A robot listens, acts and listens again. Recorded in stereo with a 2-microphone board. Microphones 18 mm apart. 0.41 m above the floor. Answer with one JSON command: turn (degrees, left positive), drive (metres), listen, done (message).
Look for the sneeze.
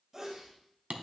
{"turn": -20}
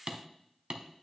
{"listen": true}
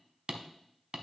{"done": "I heard a sneeze, but can't make it out now. It was about straight ahead or 140° right."}